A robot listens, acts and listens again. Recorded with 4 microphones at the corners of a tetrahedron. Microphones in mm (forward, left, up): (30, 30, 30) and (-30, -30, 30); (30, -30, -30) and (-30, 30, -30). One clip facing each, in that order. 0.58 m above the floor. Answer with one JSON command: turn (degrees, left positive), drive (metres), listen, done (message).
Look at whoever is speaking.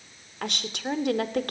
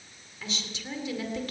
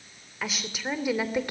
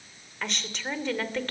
{"turn": 30}
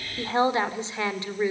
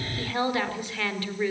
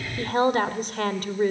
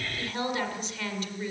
{"turn": -25}
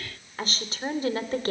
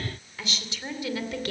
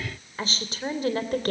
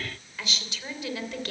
{"done": "Found it: a woman speaking, straight ahead."}